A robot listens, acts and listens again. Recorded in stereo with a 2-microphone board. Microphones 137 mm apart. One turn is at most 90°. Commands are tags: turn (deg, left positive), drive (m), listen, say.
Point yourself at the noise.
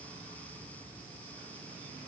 <listen/>
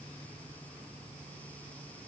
<listen/>
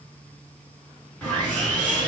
<turn deg="30"/>
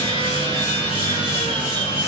<turn deg="90"/>
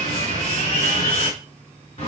<turn deg="55"/>
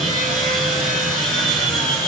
<say>Facing the sawing, 1 to 2 m away.</say>